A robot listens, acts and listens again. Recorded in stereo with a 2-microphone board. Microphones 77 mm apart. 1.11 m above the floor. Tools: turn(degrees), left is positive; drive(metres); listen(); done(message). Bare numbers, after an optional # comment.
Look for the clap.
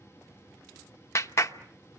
# The clap: about 40° left or 140° left.
turn(40)
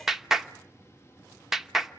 done("Found it: a clap, straight ahead, 1 to 2 m away.")